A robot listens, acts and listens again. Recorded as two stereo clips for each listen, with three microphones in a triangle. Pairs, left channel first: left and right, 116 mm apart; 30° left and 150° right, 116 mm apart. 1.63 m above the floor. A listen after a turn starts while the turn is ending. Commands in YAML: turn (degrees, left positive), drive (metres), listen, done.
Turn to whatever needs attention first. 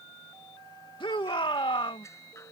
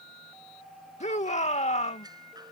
turn: 45
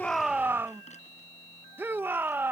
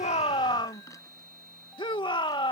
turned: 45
turn: -20
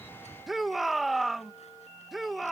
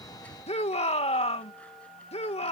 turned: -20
done: "Found it: a shout, straight ahead."